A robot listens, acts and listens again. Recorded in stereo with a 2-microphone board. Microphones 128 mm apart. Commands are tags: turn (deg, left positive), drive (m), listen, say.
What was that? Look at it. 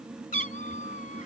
<turn deg="75"/>
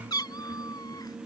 <turn deg="30"/>
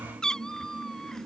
<say>Found it: a cat meowing, straight ahead.</say>